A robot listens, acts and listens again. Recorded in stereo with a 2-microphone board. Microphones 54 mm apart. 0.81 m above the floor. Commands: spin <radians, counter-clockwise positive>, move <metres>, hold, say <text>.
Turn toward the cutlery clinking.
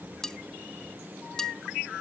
spin 0.52
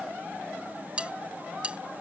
spin -0.35
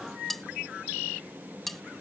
say Facing the cutlery clinking.